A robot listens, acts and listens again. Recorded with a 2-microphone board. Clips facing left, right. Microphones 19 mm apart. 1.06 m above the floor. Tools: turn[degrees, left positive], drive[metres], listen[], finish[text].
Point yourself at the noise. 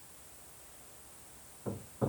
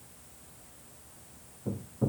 Thought: The hammering: about 35° left or 145° left.
Action: turn[35]
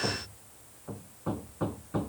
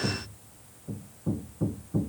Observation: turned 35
Thought: So it is at 110° left.
Action: turn[110]
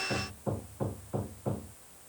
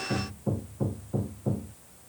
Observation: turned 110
Thought: The hammering is now 25° left.
Action: turn[25]
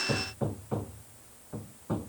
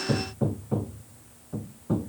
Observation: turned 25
Thought: The hammering is now 10° left.
Action: turn[10]
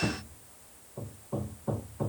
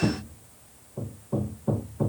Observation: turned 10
Action: finish[Found it: hammering, straight ahead.]